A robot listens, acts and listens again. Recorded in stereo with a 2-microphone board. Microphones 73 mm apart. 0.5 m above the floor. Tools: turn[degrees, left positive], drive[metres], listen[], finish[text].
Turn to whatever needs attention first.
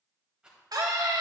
Thought: The scream: about 65° right or 115° right.
Action: turn[-65]
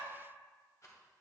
Action: listen[]
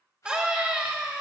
Thought: So it is at 15° right.
Action: turn[-15]
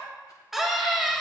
Action: finish[Facing the scream, 1 to 2 m away.]